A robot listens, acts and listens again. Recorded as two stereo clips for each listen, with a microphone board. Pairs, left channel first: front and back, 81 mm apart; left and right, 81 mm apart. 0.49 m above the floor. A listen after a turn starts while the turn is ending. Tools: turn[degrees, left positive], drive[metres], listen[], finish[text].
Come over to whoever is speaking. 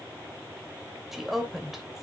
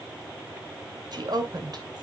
Thought: The woman speaking: 95° right.
Action: turn[-95]
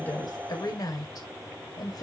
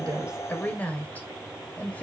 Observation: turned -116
Thought: The woman speaking is now 20° left.
Action: turn[20]
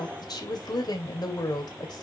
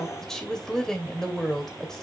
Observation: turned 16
Action: drive[1.0]
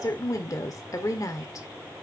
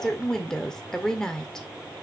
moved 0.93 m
Thought: The woman speaking is now 10° left.
Action: turn[10]
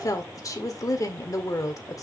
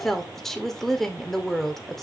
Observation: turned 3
Action: drive[1.0]
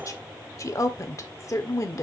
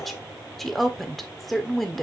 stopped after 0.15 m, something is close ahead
Action: finish[Arrived at the woman speaking, straight ahead.]